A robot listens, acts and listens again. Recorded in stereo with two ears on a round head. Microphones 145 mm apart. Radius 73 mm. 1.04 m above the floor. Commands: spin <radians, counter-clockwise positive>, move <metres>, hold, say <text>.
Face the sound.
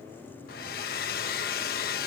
spin 1.13
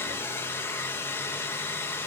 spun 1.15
spin 0.26
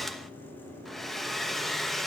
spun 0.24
say Facing the hair dryer.